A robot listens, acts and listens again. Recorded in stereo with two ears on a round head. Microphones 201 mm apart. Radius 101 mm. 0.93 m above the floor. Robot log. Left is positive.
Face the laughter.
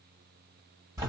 cmd idle
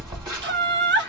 note: The laughter: about 50° right or 130° right.
cmd yaw -50
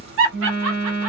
note: So it is at 70° right.
cmd yaw -70
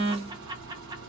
cmd idle
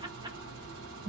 cmd idle
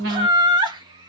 note: The laughter is now 20° right.
cmd yaw -20
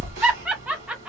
end: Found it: laughter, straight ahead.